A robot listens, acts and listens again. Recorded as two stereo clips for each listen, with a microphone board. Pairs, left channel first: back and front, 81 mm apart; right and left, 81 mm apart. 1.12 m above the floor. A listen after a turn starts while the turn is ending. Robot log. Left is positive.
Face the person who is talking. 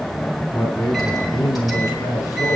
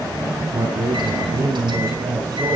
note: The man speaking: 135° left.
cmd yaw +135
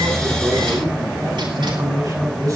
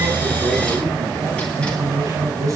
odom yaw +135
note: The man speaking is now 40° left.
cmd yaw +40
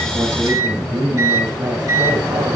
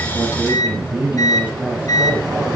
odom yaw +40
note: The man speaking is now 15° left.
cmd yaw +15
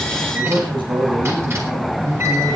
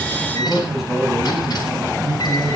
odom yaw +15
end: Facing the man speaking, over 4 m away.